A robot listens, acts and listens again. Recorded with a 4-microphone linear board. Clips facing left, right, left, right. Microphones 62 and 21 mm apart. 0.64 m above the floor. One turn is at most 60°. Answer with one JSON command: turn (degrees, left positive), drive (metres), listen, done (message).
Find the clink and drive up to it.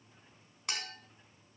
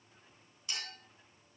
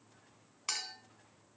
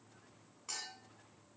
{"turn": 60}
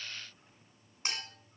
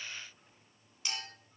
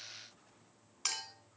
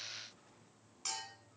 {"turn": 40}
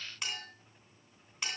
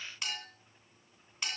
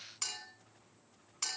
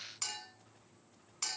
{"drive": 1.0}
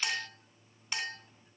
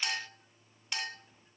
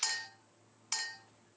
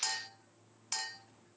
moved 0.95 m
{"drive": 1.0}
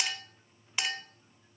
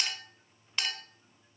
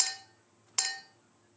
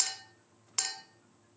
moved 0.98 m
{"turn": 10}
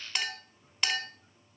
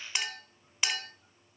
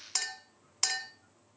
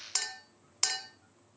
{"drive": 1.0}
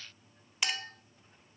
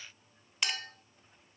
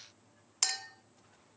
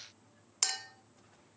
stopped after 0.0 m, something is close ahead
{"done": "I am next to the clink."}